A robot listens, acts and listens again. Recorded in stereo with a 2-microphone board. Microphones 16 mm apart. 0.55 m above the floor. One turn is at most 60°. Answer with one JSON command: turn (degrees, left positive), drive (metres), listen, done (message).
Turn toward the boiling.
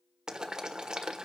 {"turn": -50}
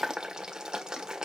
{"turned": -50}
{"turn": -60}
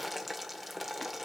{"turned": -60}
{"done": "Found it: boiling, straight ahead."}